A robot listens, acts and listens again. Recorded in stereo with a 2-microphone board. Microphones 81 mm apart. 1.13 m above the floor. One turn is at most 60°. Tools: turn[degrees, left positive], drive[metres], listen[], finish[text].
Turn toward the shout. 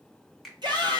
Thought: The shout: about 60° right or 120° right.
Action: turn[-60]
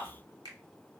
Action: listen[]
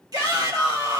Thought: So it is at 60° right.
Action: turn[-60]
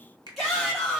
Action: finish[Found it: a shout, straight ahead.]